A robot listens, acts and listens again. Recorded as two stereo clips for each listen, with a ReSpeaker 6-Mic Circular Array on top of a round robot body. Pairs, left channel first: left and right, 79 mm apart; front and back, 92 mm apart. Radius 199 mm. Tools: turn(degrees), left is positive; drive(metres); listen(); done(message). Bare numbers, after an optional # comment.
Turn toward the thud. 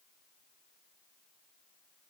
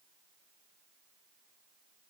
listen()
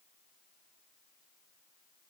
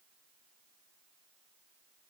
listen()
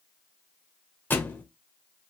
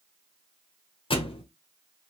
# The thud: 25° left.
turn(25)
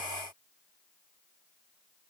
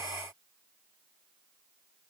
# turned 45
# Nothing new. It was at 20° right.
turn(-20)
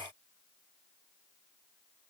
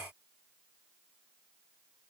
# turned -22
done("Facing where the thud came from. I can't hear it now.")